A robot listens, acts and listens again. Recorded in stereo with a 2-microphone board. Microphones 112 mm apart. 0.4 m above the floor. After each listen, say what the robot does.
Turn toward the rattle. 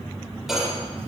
Turn 30° right.
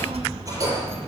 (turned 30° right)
Turn 150° right.
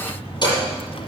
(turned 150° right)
Turn 40° left.
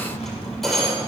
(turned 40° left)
Found it: a rattle, straight ahead.